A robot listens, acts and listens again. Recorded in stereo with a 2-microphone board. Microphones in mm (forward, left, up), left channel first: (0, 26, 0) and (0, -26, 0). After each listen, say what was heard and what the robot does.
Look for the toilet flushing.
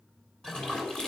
Turn 30° left.
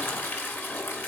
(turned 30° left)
So it is at 140° left. Turn 140° left.
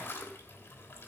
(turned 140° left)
The toilet flushing is now 40° left. Turn 40° left.
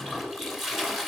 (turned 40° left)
Facing the toilet flushing.